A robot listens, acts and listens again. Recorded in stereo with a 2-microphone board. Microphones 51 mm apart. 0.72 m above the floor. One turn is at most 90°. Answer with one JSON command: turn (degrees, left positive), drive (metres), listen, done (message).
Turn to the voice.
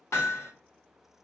{"listen": true}
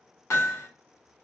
{"listen": true}
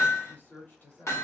{"turn": 45}
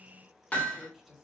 {"done": "Facing the woman speaking, 2 to 4 m away."}